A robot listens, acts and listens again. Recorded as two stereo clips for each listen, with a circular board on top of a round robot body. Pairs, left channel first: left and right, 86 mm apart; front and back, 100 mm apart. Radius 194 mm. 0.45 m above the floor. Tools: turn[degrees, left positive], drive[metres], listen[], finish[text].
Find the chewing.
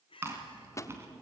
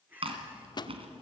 Thought: The chewing: 150° right.
Action: turn[-150]
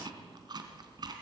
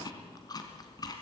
Thought: The chewing is now 50° right.
Action: turn[-50]
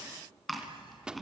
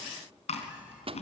Action: finish[Facing the chewing.]